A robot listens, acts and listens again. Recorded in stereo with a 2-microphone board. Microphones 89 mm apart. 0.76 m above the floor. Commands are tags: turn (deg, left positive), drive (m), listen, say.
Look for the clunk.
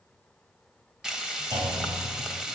<turn deg="-55"/>
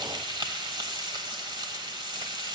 <listen/>
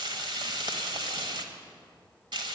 <say>I heard a clunk, but can't make it out now. It was about straight ahead or 70° right.</say>